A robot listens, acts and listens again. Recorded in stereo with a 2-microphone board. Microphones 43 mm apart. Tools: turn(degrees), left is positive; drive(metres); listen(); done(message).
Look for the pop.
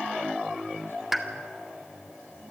turn(degrees=-30)
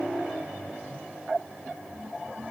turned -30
listen()
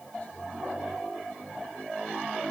done("I heard a pop, but can't make it out now. It was about 25° left or 145° right.")